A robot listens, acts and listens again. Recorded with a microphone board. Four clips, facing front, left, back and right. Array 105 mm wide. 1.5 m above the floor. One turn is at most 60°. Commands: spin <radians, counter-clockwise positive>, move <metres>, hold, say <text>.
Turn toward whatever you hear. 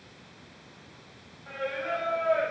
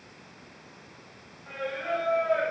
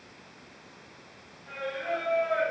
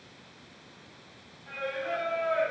spin 0.96
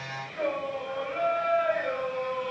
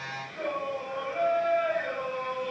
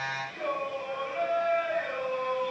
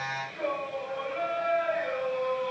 spin 0.17
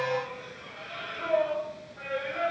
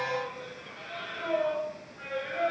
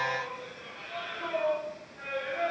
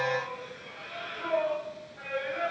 say Facing the singing, over 4 m away.